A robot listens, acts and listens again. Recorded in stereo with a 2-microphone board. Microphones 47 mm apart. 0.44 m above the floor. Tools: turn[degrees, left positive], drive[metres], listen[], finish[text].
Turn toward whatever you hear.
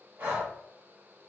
Thought: The breathing: about 60° right or 120° right.
Action: turn[-60]
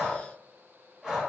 Thought: So it is at 15° right.
Action: turn[-15]
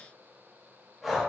Action: finish[Found it: breathing, straight ahead, 1 to 2 m away.]